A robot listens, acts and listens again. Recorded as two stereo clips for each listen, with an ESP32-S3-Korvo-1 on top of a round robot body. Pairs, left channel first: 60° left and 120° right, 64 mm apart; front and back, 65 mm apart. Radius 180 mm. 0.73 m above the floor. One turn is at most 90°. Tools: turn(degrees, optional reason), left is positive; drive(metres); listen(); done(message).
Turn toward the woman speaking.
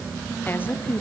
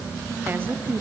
turn(degrees=90, reason="The woman speaking: 120° left.")
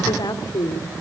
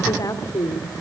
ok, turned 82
turn(degrees=35, reason="The woman speaking is now 35° left.")
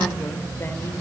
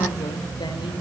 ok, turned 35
listen()
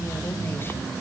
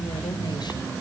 done("Found it: a woman speaking, straight ahead.")